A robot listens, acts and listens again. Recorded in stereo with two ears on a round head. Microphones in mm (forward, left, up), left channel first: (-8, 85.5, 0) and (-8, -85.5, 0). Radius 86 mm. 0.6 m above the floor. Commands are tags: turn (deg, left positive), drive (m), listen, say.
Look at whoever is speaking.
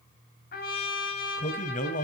<turn deg="45"/>
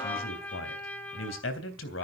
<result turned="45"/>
<turn deg="90"/>
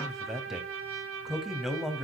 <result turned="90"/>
<say>Found it: a man speaking, straight ahead, 2 to 4 m away.</say>